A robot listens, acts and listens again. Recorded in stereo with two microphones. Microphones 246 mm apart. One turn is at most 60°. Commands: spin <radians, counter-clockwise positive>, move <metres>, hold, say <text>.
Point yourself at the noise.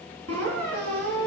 spin -1.05
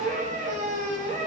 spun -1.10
spin -0.52
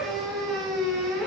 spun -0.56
say Found it: a squeak, straight ahead.